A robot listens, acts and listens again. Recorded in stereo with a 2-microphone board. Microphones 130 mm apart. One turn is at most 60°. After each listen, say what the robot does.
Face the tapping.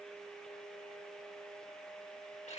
Keep listening.
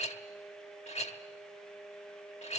Keep listening.
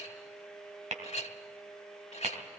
Turn 60° right.
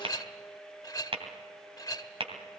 Turn 50° right.
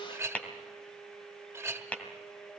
Turn 10° left.
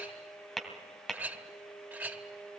Facing the tapping, 2 to 4 m away.